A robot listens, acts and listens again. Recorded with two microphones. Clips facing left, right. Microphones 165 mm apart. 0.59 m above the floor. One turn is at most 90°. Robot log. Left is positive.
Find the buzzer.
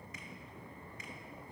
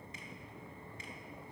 cmd idle
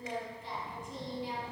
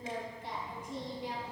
cmd idle
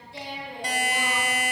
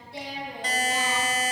cmd yaw +30
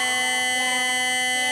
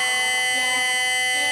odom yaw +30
note: So it is at 135° left.
cmd yaw +90
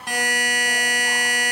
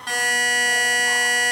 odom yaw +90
note: The buzzer is now 15° left.
cmd yaw +15
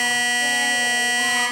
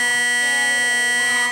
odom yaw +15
end: Found it: a buzzer, straight ahead.